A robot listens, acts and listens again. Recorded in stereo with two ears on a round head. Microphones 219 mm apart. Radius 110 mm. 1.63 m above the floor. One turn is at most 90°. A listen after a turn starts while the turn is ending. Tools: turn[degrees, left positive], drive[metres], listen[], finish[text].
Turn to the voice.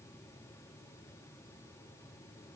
Action: listen[]
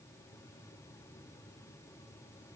Action: listen[]
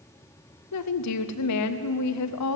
Thought: The woman speaking: about 70° left or 110° left.
Action: turn[70]
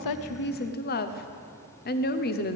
Thought: So it is at 40° left.
Action: turn[40]
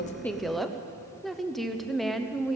Action: finish[Facing the woman speaking, under 1 m away.]